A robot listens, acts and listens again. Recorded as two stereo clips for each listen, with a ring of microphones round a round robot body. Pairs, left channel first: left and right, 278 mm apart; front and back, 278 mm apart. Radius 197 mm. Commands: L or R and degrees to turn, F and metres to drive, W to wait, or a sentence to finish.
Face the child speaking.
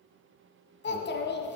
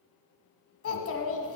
L40
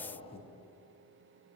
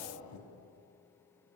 L20
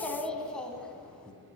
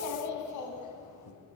Found it: a child speaking, straight ahead.